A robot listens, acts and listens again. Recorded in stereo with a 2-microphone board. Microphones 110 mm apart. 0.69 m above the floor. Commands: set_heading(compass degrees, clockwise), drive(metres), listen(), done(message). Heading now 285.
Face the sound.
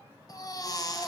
set_heading(250)
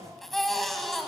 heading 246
done("Found it: a baby crying, straight ahead, 2 to 4 m away.")